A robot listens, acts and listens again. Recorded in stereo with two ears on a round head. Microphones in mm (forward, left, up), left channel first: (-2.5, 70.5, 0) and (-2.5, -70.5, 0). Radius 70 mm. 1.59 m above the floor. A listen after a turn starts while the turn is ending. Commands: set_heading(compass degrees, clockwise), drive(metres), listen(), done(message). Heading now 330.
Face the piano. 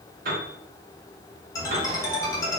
set_heading(25)
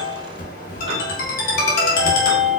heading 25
listen()
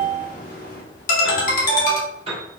set_heading(65)
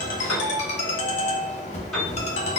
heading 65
done("Found it: a piano, straight ahead.")